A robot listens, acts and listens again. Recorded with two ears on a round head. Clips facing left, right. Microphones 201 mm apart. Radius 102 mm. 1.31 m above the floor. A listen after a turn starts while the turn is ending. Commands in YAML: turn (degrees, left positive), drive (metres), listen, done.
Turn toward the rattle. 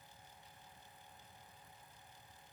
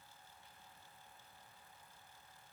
listen: true
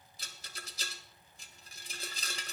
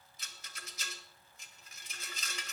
turn: 30
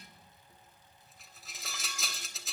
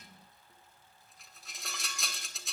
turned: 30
done: "Found it: a rattle, straight ahead."